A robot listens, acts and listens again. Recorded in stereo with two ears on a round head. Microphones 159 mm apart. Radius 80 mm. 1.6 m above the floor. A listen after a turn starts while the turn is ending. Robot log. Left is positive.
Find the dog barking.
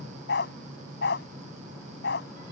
note: The dog barking: about 65° left or 115° left.
cmd yaw +65
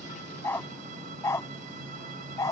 note: So it is at 20° left.
cmd yaw +20
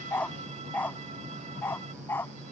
note: The dog barking is now 10° left.
cmd yaw +10
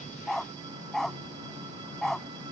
end: Found it: a dog barking, straight ahead.